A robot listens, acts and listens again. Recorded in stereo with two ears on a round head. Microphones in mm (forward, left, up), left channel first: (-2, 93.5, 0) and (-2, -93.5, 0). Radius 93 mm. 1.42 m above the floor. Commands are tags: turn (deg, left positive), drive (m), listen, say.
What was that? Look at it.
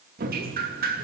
<turn deg="-45"/>
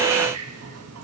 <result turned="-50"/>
<turn deg="-85"/>
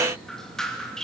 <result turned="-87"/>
<say>Facing the dripping, 2 to 4 m away.</say>